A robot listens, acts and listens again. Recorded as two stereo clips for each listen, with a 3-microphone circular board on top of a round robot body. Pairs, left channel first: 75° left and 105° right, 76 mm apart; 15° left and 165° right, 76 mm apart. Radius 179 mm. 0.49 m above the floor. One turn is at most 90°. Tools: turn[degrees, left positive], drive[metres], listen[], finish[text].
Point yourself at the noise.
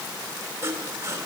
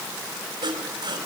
Thought: The sawing: 160° right.
Action: turn[-90]
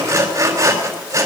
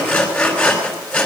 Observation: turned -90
Thought: The sawing is now 65° right.
Action: turn[-65]
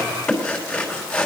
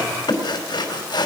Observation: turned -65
Action: finish[Found it: sawing, straight ahead.]